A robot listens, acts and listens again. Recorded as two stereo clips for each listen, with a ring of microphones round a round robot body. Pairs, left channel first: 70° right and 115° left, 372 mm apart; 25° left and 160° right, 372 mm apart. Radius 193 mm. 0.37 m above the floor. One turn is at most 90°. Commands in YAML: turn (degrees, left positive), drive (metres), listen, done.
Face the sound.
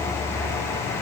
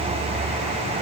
listen: true
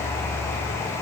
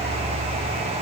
listen: true
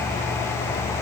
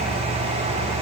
done: "I can't make out anything to turn to."